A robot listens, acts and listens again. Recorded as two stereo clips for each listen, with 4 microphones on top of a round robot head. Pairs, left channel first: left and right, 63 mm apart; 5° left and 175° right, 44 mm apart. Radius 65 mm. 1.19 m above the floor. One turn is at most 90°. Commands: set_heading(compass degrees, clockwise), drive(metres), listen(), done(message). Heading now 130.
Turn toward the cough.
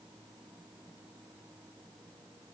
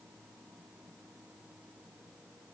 listen()
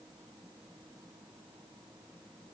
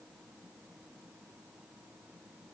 listen()
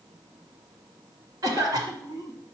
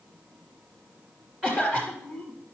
set_heading(220)
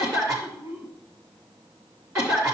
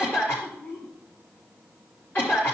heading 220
set_heading(275)
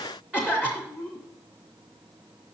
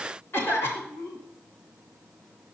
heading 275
set_heading(290)
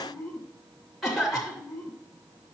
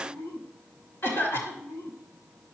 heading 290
done("Found it: a cough, straight ahead, 2 to 4 m away.")